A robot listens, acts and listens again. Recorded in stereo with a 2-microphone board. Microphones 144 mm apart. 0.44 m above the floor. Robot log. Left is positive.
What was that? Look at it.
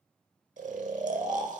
note: The snoring: about 70° right or 110° right.
cmd yaw -70
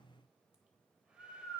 note: So it is at 10° right.
cmd yaw -10
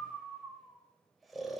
end: Found it: snoring, straight ahead, under 1 m away.